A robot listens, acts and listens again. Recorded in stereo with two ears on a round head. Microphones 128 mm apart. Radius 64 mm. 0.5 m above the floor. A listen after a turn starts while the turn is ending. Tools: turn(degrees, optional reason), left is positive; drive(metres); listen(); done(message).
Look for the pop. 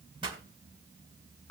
turn(degrees=-35, reason="The pop: about 35° right or 145° right.")
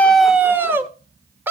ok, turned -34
listen()
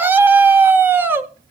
done("I heard a pop, but can't make it out now. It was about straight ahead or 110° right.")